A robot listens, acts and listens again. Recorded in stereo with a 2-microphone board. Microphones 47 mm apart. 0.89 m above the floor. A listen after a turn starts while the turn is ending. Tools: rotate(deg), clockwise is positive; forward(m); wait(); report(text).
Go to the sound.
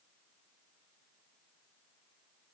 wait()
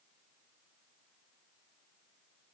wait()
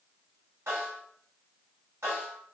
rotate(90)
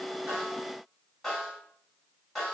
forward(1.0)
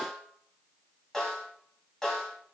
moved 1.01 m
rotate(-10)
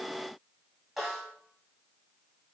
forward(1.0)
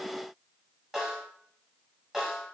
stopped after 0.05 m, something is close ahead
rotate(10)
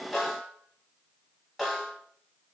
report("I am next to the snare drum.")